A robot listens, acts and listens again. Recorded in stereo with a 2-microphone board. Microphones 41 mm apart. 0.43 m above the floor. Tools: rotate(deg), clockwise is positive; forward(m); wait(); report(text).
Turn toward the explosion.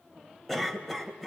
wait()
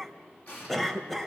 rotate(-55)
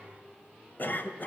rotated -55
wait()
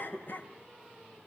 report("I heard an explosion, but can't make it out now. It was about straight ahead or 70° left.")